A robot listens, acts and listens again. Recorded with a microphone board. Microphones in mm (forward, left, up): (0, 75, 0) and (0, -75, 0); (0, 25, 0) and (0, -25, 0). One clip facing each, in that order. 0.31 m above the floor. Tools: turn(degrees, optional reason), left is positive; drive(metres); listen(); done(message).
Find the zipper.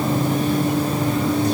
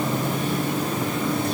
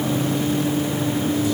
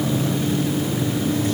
listen()
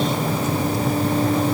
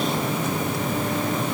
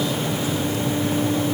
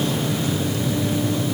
listen()
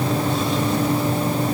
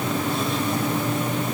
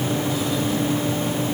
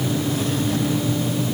done("I can't make out a zipper.")